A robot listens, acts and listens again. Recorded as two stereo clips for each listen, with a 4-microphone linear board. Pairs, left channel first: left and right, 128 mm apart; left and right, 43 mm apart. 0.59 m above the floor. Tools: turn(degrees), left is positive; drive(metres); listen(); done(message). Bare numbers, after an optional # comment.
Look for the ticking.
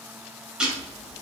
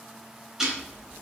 turn(-30)
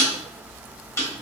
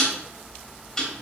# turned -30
# So it is at 20° left.
turn(20)
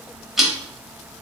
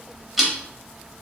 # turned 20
done("Facing the ticking, under 1 m away.")